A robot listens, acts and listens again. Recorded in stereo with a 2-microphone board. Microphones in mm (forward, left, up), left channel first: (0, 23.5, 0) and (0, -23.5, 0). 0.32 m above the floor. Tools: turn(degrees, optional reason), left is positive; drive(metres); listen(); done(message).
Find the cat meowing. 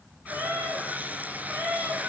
turn(degrees=-45, reason="The cat meowing: about 45° right or 135° right.")
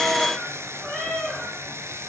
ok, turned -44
done("Facing the cat meowing.")